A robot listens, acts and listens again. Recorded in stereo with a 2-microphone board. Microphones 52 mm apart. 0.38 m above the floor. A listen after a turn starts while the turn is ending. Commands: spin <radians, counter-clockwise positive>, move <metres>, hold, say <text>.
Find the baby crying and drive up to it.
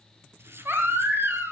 spin -0.87
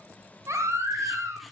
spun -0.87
spin -1.40
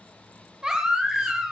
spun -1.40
spin -0.26
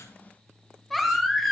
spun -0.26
move 1.0
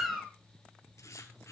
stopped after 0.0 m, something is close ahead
say Blocked. The baby crying is further on, straight ahead.